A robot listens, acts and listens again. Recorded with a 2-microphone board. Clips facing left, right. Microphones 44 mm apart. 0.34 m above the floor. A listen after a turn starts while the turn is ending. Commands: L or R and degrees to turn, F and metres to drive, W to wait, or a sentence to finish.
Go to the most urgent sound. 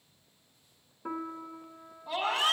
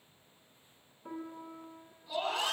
L65
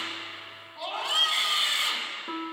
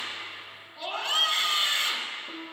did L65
L10
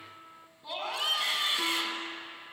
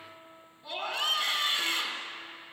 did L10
F1.0
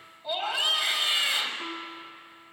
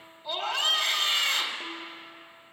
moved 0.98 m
L15
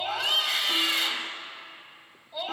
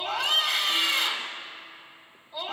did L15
F1.0
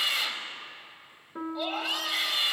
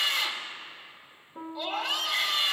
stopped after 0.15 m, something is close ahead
Arrived at the scream, straight ahead.